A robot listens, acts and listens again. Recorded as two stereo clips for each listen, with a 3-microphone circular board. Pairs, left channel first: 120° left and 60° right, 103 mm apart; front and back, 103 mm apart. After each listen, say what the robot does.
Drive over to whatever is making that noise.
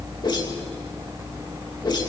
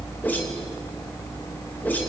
Turn 75° left.
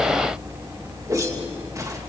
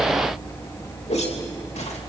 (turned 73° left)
Drive 1.0 m forward.
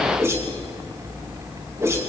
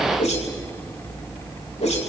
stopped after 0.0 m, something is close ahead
Blocked. The whoosh is further on, straight ahead.